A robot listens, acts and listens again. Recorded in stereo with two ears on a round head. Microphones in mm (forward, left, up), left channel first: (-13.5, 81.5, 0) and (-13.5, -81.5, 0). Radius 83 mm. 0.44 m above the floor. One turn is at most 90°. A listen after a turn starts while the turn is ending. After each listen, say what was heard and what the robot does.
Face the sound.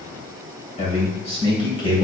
The man speaking: about 25° left or 155° left. Turn 25° left.
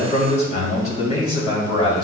The man speaking: about 30° left or 150° left. Turn 30° left.
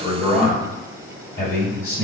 So it is at 135° left. Turn 90° left.
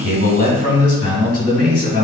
The man speaking is now 30° left. Turn 30° left.
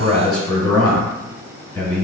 Found it: a man speaking, straight ahead, 2 to 4 m away.